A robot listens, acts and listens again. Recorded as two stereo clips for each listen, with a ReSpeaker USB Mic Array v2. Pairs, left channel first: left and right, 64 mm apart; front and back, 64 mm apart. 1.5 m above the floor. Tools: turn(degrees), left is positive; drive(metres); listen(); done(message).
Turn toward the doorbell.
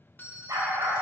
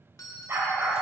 turn(degrees=30)
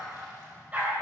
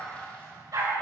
listen()
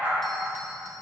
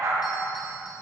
listen()
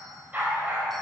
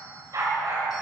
done("I heard a doorbell from this way, but can't make it out now.")